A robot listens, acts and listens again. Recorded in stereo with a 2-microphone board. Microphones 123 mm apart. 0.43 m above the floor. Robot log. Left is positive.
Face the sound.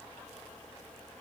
cmd idle
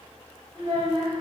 note: The child speaking: about 40° right or 140° right.
cmd yaw -40
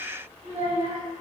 note: So it is at 95° right.
cmd yaw -95
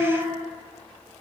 end: Found it: a child speaking, straight ahead, 1 to 2 m away.